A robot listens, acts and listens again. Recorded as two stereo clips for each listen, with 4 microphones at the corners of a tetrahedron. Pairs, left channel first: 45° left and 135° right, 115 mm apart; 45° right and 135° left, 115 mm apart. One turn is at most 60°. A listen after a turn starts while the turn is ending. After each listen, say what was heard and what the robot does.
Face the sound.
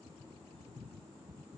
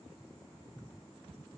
Keep listening.
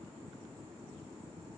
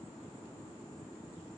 Keep listening.
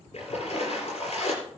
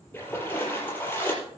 The splash: 30° left. Turn 30° left.
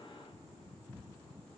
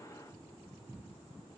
Facing where the splash came from. I can't hear it now.